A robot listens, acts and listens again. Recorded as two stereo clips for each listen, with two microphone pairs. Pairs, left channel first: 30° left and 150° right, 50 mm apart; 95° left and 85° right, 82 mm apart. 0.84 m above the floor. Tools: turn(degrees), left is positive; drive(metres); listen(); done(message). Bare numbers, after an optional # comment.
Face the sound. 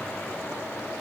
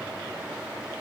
listen()
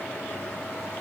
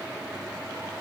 listen()
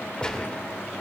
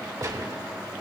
# The gunshot: 40° right.
turn(-40)
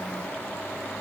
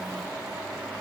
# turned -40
done("I heard a gunshot from this way, but can't make it out now.")